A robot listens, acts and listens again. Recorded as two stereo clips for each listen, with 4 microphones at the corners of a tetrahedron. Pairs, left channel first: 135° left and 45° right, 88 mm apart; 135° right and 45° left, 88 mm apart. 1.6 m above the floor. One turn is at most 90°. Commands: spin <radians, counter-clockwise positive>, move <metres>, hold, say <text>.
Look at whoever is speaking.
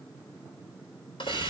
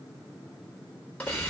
hold
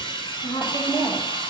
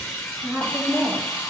spin 1.57
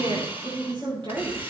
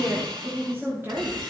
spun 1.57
spin -0.35
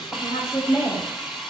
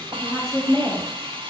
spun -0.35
say Found it: a woman speaking, straight ahead, 2 to 4 m away.